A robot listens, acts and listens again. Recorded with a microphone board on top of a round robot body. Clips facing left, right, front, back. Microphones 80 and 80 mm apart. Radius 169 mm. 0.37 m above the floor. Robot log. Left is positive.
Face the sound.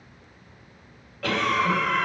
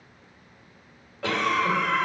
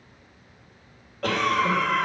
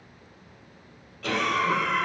note: The cough: 25° right.
cmd yaw -25
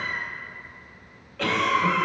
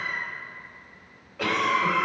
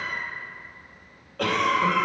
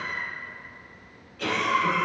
note: The cough is now 15° right.
cmd yaw -15
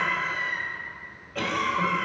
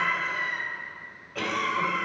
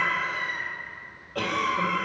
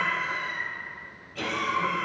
end: Found it: a cough, straight ahead, 2 to 4 m away.